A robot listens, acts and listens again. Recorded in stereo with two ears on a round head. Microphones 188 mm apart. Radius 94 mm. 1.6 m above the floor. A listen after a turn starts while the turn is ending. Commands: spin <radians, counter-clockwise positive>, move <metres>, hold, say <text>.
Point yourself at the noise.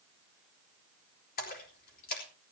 spin 0.79
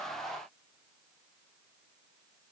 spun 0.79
hold
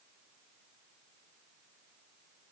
say I heard a splash, but can't make it out now. It was about straight ahead or 90° left.